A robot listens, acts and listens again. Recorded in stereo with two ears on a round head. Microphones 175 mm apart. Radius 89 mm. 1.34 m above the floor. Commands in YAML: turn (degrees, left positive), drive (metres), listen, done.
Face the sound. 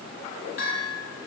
turn: 75
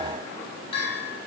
turn: 30
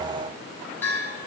turn: 10
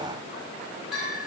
done: "Facing the bell."